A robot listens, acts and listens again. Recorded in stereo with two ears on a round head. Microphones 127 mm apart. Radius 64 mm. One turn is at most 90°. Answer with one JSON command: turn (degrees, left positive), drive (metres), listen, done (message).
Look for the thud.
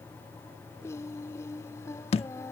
{"turn": 45}
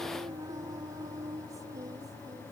{"listen": true}
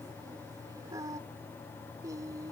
{"done": "I heard a thud, but can't make it out now. It was about straight ahead or 90° left."}